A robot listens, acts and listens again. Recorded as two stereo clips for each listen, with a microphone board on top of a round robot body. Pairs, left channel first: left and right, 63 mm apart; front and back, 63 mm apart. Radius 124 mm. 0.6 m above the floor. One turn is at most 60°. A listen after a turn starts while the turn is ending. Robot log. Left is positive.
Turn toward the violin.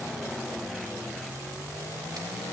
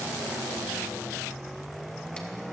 cmd idle
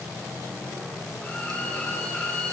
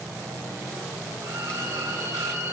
note: The violin: 155° left.
cmd yaw +60
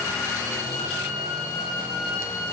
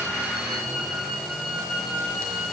note: The violin is now 90° left.
cmd yaw +60
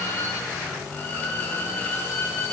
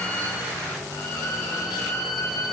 note: The violin is now 30° left.
cmd yaw +30
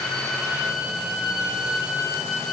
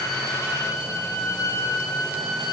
note: The violin is now 10° right.
cmd yaw -10
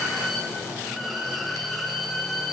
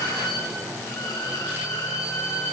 end: Facing the violin.